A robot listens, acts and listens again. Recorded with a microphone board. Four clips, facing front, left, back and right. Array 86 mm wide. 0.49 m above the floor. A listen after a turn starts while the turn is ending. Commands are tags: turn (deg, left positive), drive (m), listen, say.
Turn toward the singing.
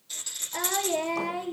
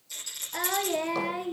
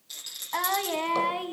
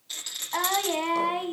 <turn deg="-130"/>
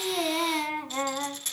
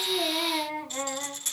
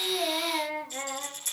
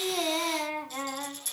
<turn deg="-10"/>
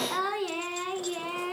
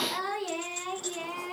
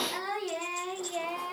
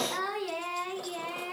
<turn deg="-10"/>
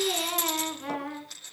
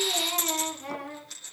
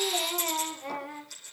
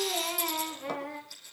<say>Facing the singing, over 4 m away.</say>